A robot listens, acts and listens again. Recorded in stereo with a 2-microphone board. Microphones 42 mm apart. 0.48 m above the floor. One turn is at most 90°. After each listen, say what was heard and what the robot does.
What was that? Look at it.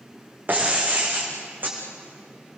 The breaking glass: about 45° right or 135° right. Turn 45° right.
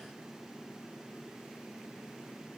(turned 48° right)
Keep listening.
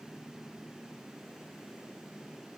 I heard breaking glass, but can't make it out now. It was about 5° left or 90° right.